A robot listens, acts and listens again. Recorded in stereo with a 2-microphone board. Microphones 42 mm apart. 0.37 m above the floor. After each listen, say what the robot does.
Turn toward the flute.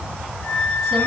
Turn 35° left.
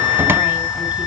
Found it: a flute, straight ahead, over 4 m away.